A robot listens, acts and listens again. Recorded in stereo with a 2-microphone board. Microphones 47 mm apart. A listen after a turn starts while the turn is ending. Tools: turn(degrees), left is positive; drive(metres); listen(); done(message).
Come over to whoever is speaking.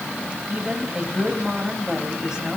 turn(degrees=-30)
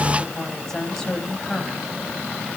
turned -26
turn(degrees=10)
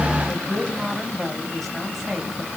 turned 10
drive(metres=1.0)
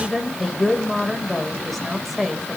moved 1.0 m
drive(metres=1.0)
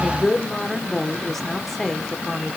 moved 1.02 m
drive(metres=1.0)
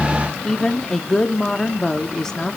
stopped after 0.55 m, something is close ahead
turn(degrees=10)
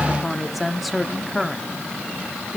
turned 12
done("Arrived at the woman speaking, straight ahead.")